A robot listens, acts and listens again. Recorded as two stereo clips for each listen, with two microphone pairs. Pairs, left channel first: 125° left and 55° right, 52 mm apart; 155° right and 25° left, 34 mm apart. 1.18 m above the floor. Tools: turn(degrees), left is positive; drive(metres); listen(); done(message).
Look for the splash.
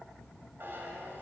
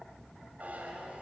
listen()
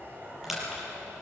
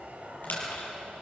turn(degrees=-140)
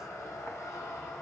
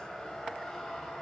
done("Facing where the splash came from. I can't hear it now.")